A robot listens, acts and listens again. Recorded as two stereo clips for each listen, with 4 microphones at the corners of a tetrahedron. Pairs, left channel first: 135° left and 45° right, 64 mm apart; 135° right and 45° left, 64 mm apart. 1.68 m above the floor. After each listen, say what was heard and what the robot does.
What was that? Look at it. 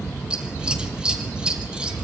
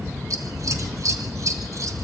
The scissors: 30° left. Turn 30° left.
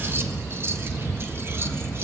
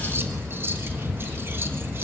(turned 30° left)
Facing the scissors, 1 to 2 m away.